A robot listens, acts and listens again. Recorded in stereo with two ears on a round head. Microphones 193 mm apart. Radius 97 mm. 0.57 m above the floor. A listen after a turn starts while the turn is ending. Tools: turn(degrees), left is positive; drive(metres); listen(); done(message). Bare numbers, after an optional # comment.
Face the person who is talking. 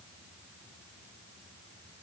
listen()
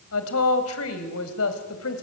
# The woman speaking: about 75° left or 105° left.
turn(75)
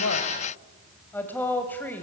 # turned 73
# So it is at 10° left.
turn(10)
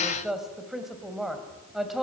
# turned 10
done("Found it: a woman speaking, straight ahead.")